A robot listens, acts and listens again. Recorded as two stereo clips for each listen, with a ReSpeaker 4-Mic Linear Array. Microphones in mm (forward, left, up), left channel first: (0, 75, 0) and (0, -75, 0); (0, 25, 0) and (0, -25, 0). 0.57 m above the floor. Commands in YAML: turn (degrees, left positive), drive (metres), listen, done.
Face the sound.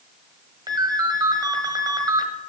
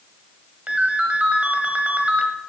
turn: -25
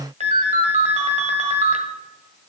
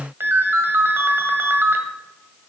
turn: -125
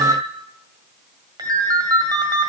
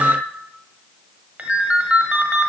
turn: -30
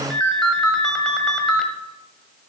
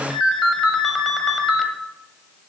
done: "Facing the ringtone."